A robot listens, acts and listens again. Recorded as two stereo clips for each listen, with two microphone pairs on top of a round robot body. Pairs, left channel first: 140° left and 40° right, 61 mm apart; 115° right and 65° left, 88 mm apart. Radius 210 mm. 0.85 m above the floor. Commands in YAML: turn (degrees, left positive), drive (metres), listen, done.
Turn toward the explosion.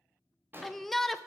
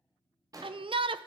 turn: 15
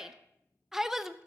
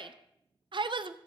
done: "Facing where the explosion came from. I can't hear it now."